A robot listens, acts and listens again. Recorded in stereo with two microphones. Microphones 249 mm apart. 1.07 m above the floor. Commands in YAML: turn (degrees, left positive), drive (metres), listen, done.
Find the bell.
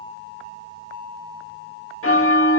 turn: 60
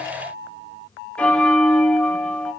done: "Found it: a bell, straight ahead, 1 to 2 m away."